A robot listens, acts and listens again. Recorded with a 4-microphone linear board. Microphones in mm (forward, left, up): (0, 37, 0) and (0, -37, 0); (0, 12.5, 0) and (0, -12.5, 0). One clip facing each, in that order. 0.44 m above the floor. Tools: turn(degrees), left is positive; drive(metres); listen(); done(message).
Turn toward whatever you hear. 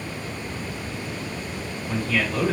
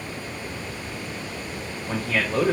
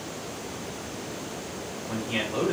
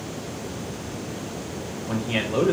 turn(degrees=-40)
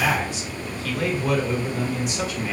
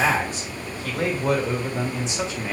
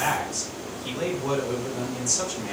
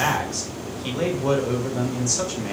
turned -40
turn(degrees=-25)
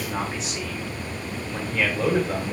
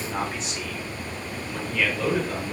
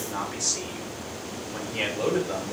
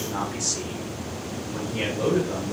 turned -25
turn(degrees=15)
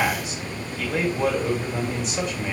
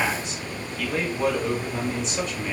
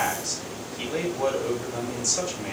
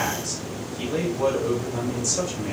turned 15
done("Found it: a man speaking, straight ahead, 1 to 2 m away.")